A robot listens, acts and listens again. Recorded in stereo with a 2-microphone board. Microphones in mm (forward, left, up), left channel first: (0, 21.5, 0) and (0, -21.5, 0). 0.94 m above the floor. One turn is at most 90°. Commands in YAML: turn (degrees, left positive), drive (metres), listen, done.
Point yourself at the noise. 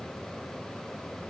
listen: true
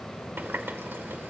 turn: -55
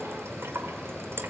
turn: -70
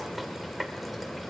done: "Facing the running tap, 2 to 4 m away."